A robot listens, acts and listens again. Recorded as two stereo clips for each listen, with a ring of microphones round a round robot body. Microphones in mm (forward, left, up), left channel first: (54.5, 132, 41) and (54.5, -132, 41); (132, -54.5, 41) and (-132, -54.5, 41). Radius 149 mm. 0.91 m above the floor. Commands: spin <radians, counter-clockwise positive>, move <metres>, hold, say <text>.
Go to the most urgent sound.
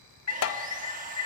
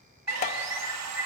spin 1.75
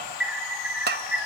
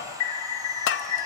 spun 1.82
move 1.0
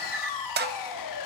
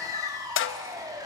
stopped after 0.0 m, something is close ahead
say Blocked. The alarm is further on, straight ahead.